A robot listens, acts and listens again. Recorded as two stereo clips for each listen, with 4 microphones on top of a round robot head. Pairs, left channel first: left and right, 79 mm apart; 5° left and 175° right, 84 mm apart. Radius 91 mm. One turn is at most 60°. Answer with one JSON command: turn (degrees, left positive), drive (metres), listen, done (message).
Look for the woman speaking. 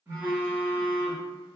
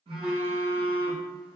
{"listen": true}
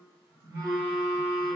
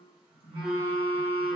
{"listen": true}
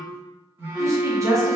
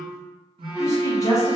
{"turn": -45}
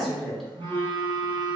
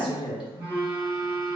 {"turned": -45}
{"done": "Found it: a woman speaking, straight ahead."}